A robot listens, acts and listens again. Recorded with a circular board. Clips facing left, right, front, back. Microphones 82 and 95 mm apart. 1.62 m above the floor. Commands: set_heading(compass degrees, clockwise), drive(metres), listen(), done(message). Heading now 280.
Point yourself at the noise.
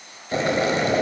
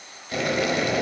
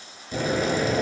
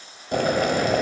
set_heading(130)
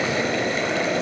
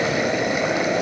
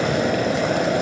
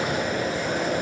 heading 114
set_heading(129)
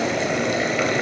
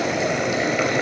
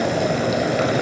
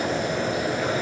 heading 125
done("Found it: boiling, straight ahead, under 1 m away.")